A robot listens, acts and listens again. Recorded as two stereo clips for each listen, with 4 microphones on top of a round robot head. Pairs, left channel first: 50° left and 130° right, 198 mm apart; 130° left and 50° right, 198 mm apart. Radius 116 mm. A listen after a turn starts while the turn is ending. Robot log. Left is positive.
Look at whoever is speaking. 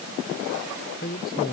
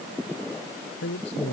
note: The man speaking: 95° left.
cmd yaw +95
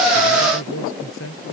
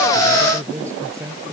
note: The man speaking is now 30° left.
cmd yaw +30
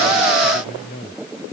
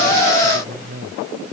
end: Found it: a man speaking, straight ahead.